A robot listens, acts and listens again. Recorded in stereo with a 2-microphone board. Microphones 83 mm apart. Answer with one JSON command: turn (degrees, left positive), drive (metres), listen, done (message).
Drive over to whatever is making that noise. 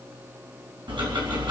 {"turn": -75}
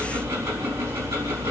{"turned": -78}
{"turn": -30}
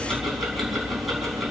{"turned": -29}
{"drive": 1.0}
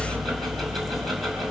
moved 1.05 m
{"drive": 1.0}
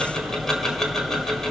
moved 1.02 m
{"drive": 1.0}
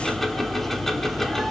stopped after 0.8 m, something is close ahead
{"done": "I am next to the ticking."}